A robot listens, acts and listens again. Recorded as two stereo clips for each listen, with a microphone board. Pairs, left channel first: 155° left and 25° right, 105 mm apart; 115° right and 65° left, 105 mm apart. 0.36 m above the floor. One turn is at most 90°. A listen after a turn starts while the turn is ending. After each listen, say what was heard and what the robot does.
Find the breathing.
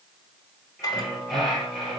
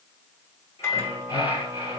The breathing: 115° right. Turn 90° right.
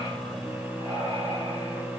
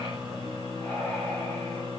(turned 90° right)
The breathing is now 40° right. Turn 40° right.
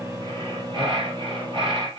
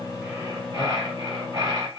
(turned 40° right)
The breathing is now 15° left. Turn 15° left.
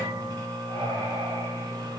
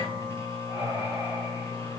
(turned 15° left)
Found it: breathing, straight ahead, 2 to 4 m away.